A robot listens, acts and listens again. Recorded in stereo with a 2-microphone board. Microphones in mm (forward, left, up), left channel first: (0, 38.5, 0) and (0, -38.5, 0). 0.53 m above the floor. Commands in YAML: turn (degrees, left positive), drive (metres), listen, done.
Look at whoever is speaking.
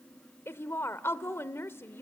turn: 35
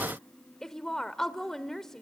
turn: 10
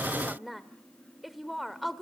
done: "Found it: a woman speaking, straight ahead, 1 to 2 m away."